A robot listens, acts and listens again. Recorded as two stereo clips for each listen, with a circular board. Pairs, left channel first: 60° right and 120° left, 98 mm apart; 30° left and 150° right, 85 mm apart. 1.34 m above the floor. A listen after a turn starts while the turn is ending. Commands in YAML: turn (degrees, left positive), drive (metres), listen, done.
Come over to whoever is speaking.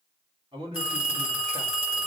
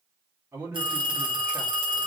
turn: 150
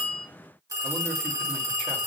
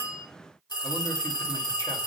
listen: true
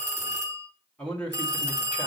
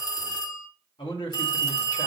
turn: 15
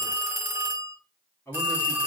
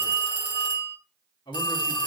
drive: 1.0
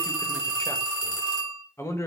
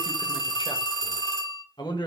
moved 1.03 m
drive: 1.0
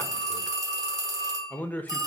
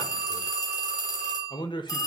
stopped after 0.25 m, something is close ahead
turn: 10
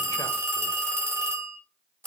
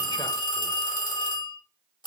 listen: true
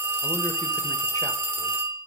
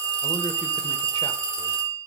listen: true
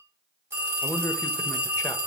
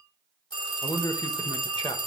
done: "I am next to the man speaking."